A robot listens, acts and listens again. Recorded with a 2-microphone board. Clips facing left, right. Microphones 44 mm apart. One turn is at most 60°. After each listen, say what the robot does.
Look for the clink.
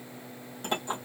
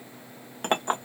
Turn 55° right.
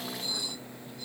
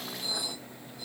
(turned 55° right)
Turn 20° right.
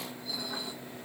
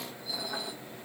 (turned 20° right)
Keep listening.
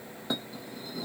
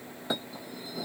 Facing the clink.